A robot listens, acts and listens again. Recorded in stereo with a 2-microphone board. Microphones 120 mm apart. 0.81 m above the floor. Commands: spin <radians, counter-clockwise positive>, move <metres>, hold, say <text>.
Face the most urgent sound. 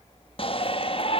spin 0.87
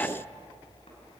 hold
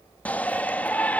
spin 0.26
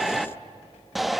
say Found it: a shout, straight ahead, 1 to 2 m away.